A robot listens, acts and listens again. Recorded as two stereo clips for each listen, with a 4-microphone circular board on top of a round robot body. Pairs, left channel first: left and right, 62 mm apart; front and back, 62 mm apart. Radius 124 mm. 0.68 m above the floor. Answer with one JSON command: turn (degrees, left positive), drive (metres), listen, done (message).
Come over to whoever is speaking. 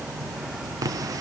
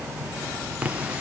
{"listen": true}
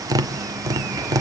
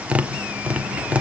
{"listen": true}
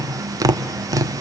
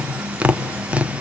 {"done": "I can't make out anyone speaking, only tapping."}